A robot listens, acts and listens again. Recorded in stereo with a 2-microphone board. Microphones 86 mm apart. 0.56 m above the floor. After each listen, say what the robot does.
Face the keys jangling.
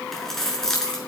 Turn 30° left.
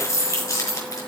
Turn 140° left.
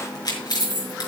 Turn 50° left.
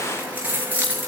Turn 20° right.
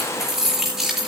Found it: keys jangling, straight ahead.